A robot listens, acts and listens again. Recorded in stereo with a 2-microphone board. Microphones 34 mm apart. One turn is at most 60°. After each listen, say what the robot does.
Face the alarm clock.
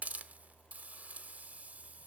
Keep listening.
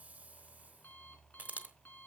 Turn 60° left.
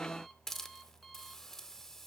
Keep listening.
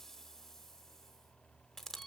Keep listening.
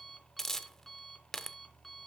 Found it: an alarm clock, straight ahead.